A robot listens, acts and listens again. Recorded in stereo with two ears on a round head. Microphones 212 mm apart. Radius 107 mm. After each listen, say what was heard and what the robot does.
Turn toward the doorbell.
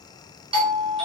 The doorbell: about 25° right or 155° right. Turn 25° right.
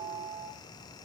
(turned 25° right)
Facing the doorbell.